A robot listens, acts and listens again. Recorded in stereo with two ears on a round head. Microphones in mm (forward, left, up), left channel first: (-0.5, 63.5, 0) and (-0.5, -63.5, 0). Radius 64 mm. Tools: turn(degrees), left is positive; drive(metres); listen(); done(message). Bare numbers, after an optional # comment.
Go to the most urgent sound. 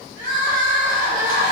# The crying: about 65° right or 115° right.
turn(-65)
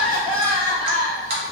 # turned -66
drive(1.0)
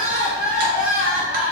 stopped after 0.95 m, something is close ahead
# The crying is now 10° right.
turn(-10)
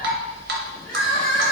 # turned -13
done("I am next to the crying.")